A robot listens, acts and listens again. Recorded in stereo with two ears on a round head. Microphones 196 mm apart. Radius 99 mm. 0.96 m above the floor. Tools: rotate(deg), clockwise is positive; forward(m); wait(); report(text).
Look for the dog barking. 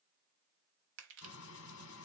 wait()
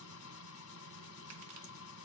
wait()
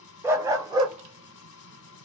rotate(20)
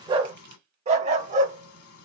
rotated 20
rotate(35)
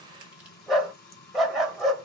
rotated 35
report("Facing the dog barking.")